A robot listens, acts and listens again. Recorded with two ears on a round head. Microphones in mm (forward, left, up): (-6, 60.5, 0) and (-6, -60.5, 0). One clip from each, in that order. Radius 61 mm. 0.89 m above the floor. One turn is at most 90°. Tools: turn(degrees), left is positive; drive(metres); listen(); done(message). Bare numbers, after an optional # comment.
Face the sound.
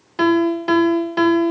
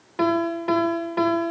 turn(90)
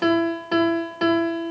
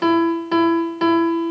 done("Facing the piano, 1 to 2 m away.")